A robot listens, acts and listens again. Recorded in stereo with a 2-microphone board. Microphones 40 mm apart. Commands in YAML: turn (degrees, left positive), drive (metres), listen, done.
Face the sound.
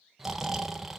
turn: -30
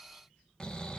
turn: 25
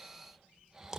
turn: -10
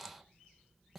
done: "Facing the snoring, 1 to 2 m away."